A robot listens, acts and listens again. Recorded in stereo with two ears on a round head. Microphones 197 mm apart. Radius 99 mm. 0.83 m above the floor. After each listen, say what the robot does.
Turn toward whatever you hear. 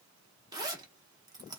Turn 20° right.
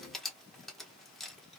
Found it: a zipper, straight ahead, under 1 m away.